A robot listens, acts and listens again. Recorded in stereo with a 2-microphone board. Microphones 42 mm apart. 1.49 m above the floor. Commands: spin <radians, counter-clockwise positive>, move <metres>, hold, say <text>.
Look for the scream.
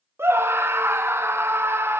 spin -1.31
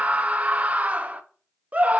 spin -0.61
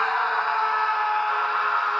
say Facing the scream, under 1 m away.